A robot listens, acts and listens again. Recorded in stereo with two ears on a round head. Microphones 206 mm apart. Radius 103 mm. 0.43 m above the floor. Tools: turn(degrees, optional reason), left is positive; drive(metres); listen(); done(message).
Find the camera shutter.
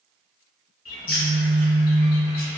turn(degrees=-30)
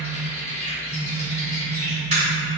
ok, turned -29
turn(degrees=-145, reason="So it is at 145° right.")
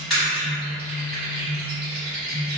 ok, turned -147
done("Facing the camera shutter, 1 to 2 m away.")